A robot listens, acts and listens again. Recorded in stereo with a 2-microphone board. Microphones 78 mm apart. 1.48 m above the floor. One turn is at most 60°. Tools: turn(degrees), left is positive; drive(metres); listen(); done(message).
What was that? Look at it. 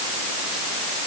listen()
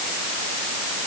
listen()
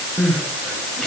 turn(degrees=30)
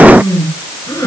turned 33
turn(degrees=60)
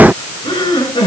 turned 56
turn(degrees=60)
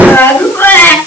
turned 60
turn(degrees=30)
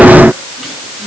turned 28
listen()
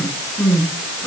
done("Facing the crying, over 4 m away.")